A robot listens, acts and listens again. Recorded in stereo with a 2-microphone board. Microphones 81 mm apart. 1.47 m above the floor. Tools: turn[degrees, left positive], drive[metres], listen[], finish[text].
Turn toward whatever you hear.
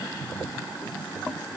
Action: listen[]
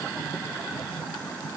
Action: listen[]
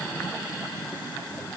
Action: finish[I can't make out anything.]